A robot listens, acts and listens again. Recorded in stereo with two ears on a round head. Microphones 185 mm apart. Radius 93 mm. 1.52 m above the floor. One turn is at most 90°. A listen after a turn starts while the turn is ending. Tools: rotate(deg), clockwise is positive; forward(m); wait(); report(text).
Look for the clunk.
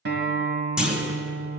rotate(30)
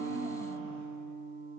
wait()
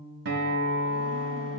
report("I heard a clunk, but can't make it out now. It was about 25° left or 145° right.")